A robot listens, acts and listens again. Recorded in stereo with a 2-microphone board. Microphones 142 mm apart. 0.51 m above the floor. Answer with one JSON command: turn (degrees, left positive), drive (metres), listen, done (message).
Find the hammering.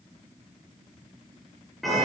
{"listen": true}
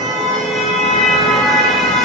{"listen": true}
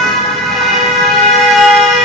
{"done": "I can't make out hammering, only a car horn."}